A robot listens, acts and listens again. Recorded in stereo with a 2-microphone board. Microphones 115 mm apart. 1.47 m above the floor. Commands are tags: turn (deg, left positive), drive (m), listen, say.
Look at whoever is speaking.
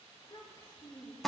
<turn deg="45"/>
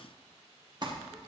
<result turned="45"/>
<listen/>
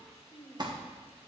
<say>Facing the child speaking.</say>